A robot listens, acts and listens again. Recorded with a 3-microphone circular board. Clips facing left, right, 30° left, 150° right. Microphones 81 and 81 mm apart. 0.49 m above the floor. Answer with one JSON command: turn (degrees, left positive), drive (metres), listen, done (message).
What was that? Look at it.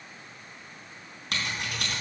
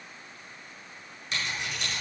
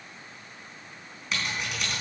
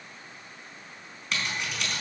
{"turn": 115}
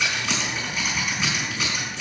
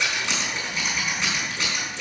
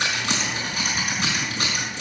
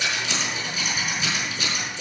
{"done": "Facing the scissors."}